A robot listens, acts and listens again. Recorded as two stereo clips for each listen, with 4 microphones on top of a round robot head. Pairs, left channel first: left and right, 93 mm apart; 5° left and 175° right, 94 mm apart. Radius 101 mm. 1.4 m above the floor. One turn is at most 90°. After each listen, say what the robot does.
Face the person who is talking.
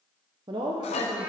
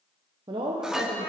Turn 90° right.
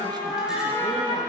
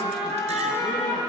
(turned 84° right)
Turn 50° right.
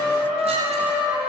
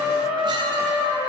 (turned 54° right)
Keep listening.
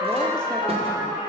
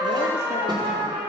Facing where the woman speaking came from. I can't hear it now.